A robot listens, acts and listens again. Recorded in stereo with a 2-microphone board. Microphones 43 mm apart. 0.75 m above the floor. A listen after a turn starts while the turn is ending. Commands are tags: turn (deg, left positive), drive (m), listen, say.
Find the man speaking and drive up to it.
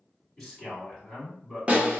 <turn deg="30"/>
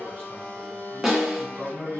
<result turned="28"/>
<turn deg="145"/>
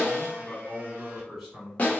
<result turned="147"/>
<drive m="1.0"/>
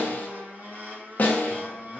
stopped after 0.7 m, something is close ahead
<listen/>
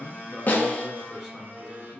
<say>Arrived at the man speaking, straight ahead.</say>